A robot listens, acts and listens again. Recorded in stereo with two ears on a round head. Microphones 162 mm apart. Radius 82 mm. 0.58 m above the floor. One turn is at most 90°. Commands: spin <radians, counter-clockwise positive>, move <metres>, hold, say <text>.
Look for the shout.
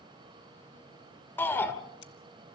spin 0.52
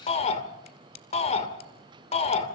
spin 1.57
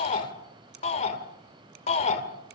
spin 0.70
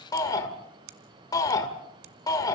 spin 0.35
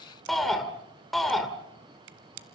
say Facing the shout, 2 to 4 m away.